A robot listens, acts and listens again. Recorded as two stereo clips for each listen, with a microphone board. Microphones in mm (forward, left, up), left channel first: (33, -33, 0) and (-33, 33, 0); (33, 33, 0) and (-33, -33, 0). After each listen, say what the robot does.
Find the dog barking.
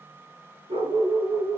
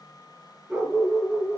Turn 145° left.
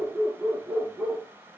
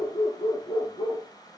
Turn 55° left.
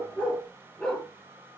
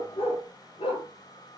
Turn 35° left.
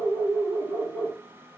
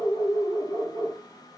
Turn 10° left.
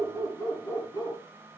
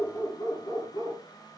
Found it: a dog barking, straight ahead, over 4 m away.